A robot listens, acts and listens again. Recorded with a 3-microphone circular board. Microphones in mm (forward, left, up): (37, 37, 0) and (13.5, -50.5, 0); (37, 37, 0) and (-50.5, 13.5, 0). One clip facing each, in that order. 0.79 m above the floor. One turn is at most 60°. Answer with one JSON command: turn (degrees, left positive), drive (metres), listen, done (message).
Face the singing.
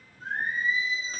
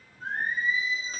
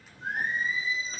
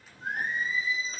{"turn": -60}
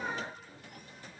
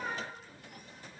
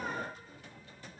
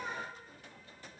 {"turn": -15}
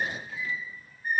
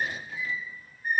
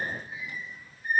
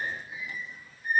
{"turn": -35}
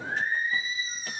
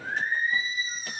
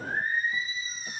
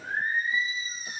{"turn": -15}
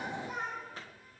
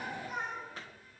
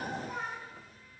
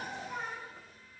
{"turn": -10}
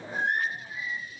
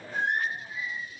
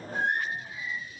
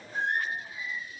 {"done": "Facing the singing."}